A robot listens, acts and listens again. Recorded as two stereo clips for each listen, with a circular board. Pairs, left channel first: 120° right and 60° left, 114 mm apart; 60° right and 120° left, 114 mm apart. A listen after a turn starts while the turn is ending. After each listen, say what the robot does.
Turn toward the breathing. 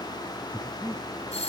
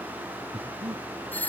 Turn 130° left.
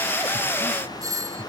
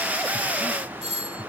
Keep listening.
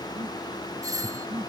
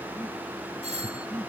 Turn 20° left.
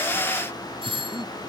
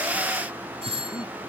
Keep listening.
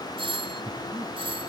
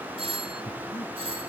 Facing the breathing.